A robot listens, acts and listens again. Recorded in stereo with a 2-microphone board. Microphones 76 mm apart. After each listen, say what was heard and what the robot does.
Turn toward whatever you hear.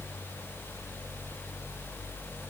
Keep listening.
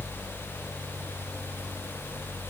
Keep listening.
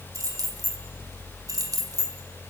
The keys jangling: about 55° right or 125° right. Turn 55° right.
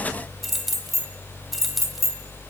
Facing the keys jangling.